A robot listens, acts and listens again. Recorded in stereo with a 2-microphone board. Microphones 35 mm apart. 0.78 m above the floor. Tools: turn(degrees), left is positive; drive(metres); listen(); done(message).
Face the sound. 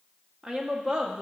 turn(degrees=-20)
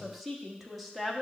done("Facing the woman speaking, 1 to 2 m away.")